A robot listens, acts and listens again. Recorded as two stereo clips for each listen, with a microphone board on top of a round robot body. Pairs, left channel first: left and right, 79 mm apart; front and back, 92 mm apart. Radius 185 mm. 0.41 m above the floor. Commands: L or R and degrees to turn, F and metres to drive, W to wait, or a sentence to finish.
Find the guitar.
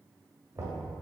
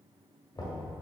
W
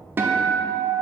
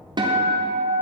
R150
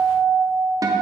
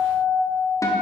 R50
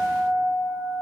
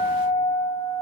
R15
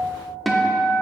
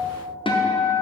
Found it: a guitar, straight ahead, under 1 m away.